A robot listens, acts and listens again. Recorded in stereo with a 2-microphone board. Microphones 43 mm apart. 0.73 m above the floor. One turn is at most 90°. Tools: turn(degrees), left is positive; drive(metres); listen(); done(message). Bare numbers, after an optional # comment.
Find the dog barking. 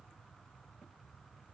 listen()
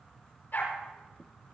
# The dog barking: about 50° left or 130° left.
turn(50)
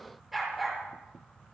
done("Found it: a dog barking, straight ahead.")